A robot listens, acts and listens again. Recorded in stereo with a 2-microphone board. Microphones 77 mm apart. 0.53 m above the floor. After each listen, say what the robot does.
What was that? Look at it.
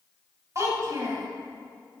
Turn 45° right.
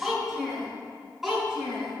Found it: a child speaking, straight ahead.